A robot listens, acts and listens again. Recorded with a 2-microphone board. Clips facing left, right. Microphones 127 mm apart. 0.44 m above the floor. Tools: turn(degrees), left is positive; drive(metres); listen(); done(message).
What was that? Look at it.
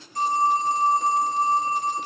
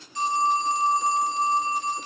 turn(degrees=50)
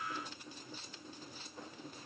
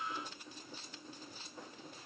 listen()
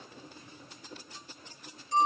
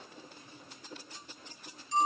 turn(degrees=70)
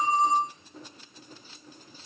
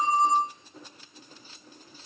done("Found it: a phone ringing, straight ahead, 1 to 2 m away.")